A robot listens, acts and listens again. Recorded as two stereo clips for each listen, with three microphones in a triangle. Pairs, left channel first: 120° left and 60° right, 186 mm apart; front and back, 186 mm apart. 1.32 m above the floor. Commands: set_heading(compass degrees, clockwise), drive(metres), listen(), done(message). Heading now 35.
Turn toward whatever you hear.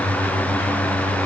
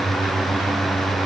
listen()
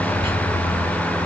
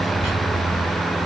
listen()
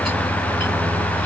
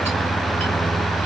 done("I can't make out anything to turn to.")